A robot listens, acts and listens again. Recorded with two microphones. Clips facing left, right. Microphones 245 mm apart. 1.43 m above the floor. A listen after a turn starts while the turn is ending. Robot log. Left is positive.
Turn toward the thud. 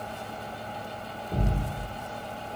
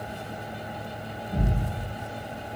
note: The thud: about 35° left or 145° left.
cmd yaw +35
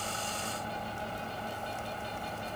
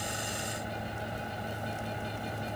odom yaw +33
cmd idle
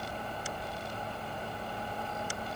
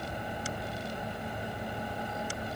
end: I heard a thud, but can't make it out now. It was about 5° left or 110° left.